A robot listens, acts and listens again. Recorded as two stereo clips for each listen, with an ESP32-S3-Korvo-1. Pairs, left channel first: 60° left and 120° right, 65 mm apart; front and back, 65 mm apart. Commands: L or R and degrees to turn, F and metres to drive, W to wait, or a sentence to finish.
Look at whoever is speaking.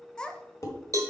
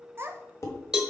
L135
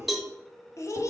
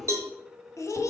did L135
L30
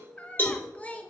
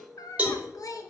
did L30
Facing the child speaking.